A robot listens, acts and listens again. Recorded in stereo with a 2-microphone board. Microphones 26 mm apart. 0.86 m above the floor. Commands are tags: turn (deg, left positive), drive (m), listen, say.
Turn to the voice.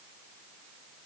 <listen/>
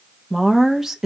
<turn deg="-15"/>
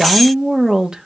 <turn deg="-150"/>
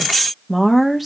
<say>Facing the woman speaking, 1 to 2 m away.</say>